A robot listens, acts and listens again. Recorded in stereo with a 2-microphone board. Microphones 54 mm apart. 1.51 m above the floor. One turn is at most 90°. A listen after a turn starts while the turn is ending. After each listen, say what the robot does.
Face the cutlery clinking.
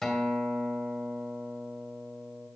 Keep listening.
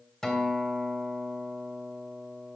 Keep listening.
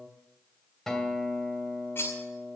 Turn 45° left.
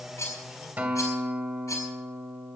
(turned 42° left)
Turn 90° left.
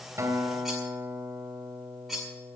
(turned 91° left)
Facing the cutlery clinking.